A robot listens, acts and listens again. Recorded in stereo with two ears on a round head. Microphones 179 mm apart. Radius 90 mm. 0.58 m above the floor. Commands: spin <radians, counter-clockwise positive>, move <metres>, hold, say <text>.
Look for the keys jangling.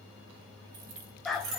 spin -1.22
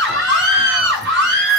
hold
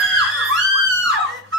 hold
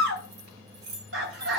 spin -0.96
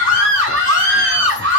hold
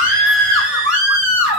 hold
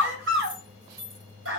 spin -0.35
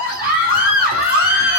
hold
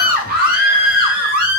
hold
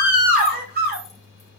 say I heard keys jangling from this way, but can't make it out now.